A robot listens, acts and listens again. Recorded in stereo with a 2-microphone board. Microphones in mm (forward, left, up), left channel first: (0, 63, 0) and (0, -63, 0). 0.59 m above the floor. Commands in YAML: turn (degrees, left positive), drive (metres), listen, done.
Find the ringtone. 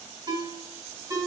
turn: -35
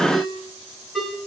done: "Found it: a ringtone, straight ahead."